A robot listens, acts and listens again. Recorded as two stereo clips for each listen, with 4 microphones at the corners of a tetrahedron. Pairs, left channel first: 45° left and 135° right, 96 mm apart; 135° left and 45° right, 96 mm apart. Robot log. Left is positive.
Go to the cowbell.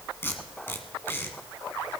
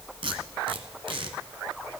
cmd idle
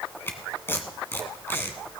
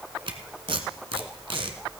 cmd idle
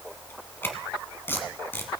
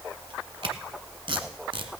end: I can't make out a cowbell to turn to.